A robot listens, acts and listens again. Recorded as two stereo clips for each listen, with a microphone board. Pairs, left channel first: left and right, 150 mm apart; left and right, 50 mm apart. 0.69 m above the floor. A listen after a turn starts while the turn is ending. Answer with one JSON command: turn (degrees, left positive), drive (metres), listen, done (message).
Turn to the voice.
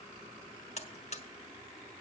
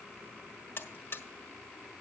{"listen": true}
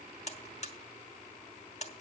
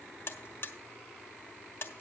{"listen": true}
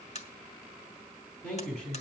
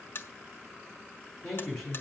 {"turn": 30}
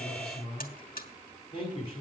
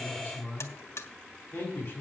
{"turn": 145}
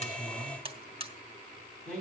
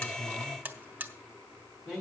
{"done": "Facing the man speaking."}